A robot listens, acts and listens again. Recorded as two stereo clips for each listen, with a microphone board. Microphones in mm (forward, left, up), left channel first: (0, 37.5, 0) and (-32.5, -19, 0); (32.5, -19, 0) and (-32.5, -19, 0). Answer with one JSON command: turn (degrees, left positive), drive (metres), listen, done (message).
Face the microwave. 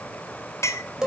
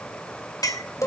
{"listen": true}
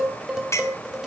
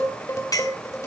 {"listen": true}
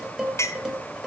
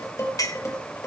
{"done": "I can't make out a microwave to turn to."}